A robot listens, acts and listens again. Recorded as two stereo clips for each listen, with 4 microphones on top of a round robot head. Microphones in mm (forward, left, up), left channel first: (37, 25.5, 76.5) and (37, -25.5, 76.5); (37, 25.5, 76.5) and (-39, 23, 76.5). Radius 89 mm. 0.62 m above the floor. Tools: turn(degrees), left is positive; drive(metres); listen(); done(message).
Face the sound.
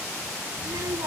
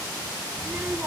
turn(degrees=-110)
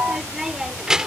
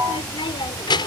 turn(degrees=-10)
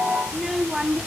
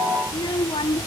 turn(degrees=-10)
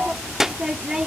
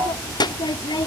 turn(degrees=-15)
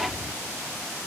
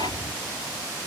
listen()
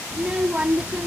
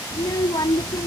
turn(degrees=-20)
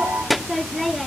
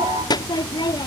done("Facing the child speaking.")